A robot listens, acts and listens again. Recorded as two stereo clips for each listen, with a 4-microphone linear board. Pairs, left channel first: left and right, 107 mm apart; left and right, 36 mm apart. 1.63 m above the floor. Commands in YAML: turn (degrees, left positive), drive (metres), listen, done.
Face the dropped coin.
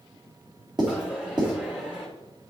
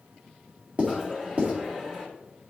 turn: -30
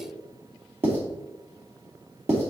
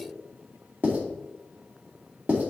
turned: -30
listen: true
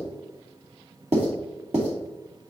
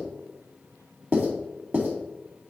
done: "I heard a dropped coin, but can't make it out now. It was about 20° left or 140° right."